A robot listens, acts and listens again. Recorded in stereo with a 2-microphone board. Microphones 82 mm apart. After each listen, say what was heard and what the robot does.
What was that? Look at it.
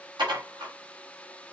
The dishes clattering: about 70° right or 110° right. Turn 70° right.
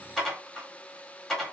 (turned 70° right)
Facing the dishes clattering, 1 to 2 m away.